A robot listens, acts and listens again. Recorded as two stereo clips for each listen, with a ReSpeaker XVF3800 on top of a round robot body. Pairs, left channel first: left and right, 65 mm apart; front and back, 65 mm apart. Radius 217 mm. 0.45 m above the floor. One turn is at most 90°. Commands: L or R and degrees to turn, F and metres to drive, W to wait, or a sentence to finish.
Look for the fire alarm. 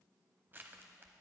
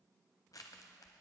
W
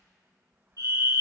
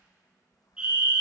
R90
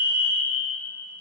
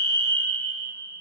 R15
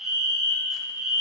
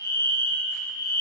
R10
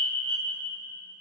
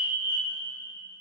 Facing the fire alarm, over 4 m away.